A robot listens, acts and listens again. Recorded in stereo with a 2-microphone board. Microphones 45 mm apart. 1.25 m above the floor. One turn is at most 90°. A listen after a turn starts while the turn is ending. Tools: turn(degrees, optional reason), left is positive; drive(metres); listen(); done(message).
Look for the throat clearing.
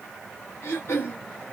turn(degrees=70, reason="The throat clearing: about 70° left or 110° left.")
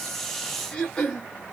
turn(degrees=20, reason="So it is at 20° left.")
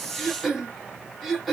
done("Facing the throat clearing, 1 to 2 m away.")